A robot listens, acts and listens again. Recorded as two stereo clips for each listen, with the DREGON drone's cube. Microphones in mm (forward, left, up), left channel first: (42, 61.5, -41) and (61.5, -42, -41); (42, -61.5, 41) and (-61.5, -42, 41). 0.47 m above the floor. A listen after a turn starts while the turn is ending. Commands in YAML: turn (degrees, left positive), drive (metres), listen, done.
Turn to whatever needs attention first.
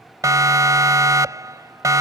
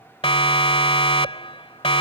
turn: -25
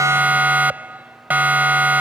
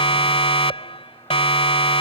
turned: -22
turn: -10
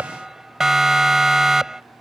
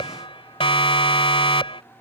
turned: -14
done: "Found it: a siren, straight ahead."